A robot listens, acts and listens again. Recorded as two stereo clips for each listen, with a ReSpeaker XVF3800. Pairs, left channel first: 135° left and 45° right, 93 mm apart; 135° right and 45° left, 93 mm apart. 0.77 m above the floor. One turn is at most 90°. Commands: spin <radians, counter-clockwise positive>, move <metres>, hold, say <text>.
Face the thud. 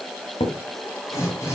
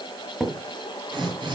spin 1.57
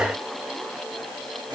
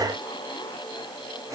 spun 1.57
spin 0.61
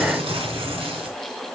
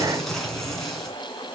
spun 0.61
say Facing where the thud came from. I can't hear it now.